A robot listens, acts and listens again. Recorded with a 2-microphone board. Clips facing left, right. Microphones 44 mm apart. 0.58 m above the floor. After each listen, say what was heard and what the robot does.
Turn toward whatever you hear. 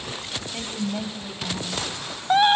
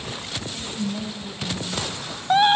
The woman speaking: about 30° left or 150° left. Turn 30° left.
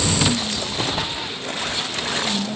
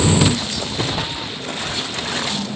So it is at 115° left. Turn 115° left.
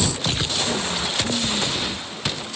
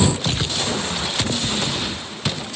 Keep listening.
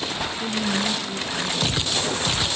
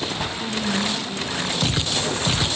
The woman speaking is now 20° left. Turn 20° left.
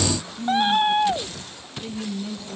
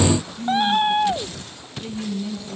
Facing the woman speaking.